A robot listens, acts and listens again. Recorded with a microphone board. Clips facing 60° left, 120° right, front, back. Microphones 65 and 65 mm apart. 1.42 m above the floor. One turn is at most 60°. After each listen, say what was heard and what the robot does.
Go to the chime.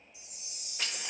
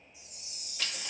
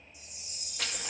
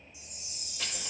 The chime: 40° left. Turn 40° left.
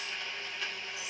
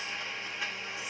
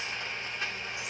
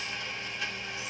Keep listening.
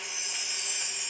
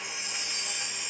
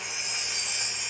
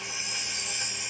The chime is now 10° right. Turn 10° right.
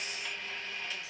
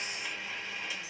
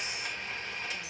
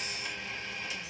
Keep listening.
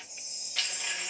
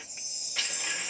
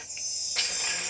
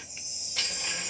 Drive 1.0 m forward.
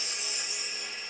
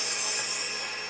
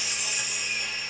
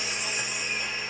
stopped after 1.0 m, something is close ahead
I am next to the chime.